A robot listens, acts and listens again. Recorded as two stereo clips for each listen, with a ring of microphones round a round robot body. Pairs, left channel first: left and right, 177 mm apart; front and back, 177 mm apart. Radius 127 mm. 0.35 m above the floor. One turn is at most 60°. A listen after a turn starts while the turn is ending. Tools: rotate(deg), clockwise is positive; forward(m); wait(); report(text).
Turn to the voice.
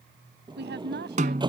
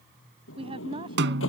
rotate(60)
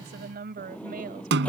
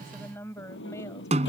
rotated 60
rotate(60)
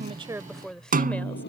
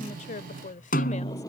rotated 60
report("Found it: a woman speaking, straight ahead.")